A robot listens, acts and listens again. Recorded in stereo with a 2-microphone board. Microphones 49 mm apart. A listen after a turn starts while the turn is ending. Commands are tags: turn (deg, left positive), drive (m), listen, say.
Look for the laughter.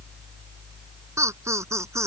<turn deg="-90"/>
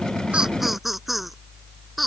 <say>Found it: laughter, straight ahead.</say>